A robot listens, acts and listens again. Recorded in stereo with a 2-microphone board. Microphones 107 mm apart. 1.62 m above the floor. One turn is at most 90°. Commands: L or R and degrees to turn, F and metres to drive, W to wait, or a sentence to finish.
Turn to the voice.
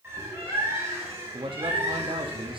R55
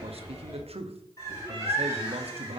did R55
R70
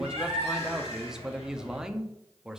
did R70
Facing the man speaking.